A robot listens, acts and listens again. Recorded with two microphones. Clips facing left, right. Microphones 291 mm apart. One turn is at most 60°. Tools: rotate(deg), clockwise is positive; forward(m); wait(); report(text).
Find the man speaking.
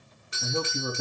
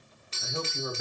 rotate(-55)
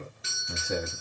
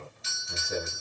rotate(-60)
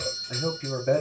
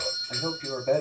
rotate(-15)
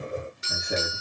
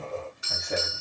wait()
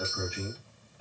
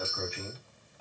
rotate(-10)
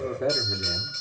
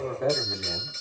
report("Facing the man speaking, over 4 m away.")